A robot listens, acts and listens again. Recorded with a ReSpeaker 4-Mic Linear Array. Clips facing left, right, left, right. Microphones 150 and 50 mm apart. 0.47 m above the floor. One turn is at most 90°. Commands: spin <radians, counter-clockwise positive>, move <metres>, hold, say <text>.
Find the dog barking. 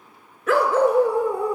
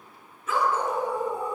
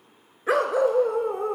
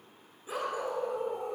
spin 1.57
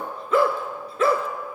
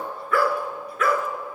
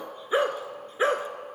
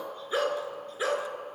spin 0.52
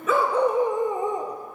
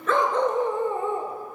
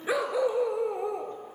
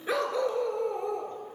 spin 0.26
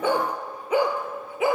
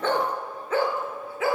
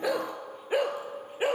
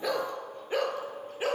spin 0.35
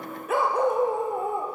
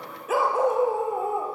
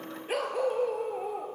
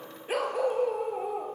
say Found it: a dog barking, straight ahead, 2 to 4 m away.